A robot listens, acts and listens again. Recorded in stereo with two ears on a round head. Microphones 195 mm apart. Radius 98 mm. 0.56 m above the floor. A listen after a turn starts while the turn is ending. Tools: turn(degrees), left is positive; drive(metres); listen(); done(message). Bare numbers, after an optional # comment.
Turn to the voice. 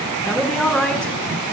turn(30)
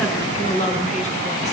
# So it is at 145° left.
turn(145)
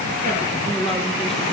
listen()
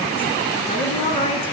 # The woman speaking is now 25° left.
turn(25)
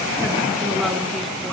listen()
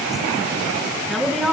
done("Facing the woman speaking, over 4 m away.")